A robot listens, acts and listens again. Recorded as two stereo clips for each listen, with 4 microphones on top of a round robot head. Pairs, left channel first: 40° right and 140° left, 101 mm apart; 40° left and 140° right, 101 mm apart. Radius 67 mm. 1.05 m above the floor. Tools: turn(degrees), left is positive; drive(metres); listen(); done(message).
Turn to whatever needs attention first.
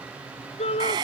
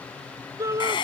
turn(degrees=-75)
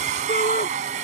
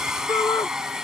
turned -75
turn(degrees=-20)
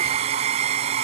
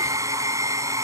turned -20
listen()
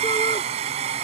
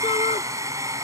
listen()
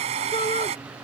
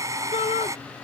done("Facing the shout.")